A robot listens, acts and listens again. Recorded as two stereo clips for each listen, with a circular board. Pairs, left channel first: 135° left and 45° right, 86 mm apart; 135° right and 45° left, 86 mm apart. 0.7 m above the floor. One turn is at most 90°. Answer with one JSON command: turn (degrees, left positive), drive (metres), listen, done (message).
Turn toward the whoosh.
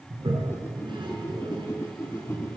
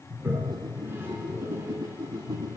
{"turn": 80}
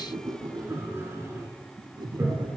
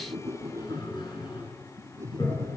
{"turn": -10}
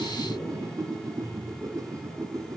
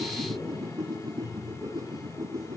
{"done": "Found it: a whoosh, straight ahead, 1 to 2 m away."}